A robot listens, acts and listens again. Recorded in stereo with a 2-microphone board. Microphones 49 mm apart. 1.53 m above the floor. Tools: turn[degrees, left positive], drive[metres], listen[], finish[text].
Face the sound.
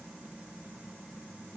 Action: listen[]
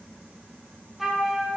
Action: turn[30]
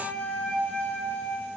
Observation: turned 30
Thought: So it is at 150° left.
Action: turn[150]
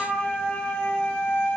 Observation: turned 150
Thought: The flute is now 30° left.
Action: turn[30]
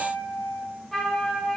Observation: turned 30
Action: finish[Facing the flute.]